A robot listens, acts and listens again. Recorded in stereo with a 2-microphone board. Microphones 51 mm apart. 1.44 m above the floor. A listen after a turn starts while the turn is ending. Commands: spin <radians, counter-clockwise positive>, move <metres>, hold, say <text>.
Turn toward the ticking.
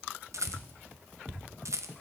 spin 0.87
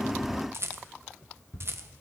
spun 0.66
spin 1.57
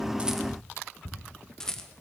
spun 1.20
spin 0.35
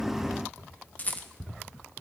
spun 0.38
say Found it: ticking, straight ahead, 2 to 4 m away.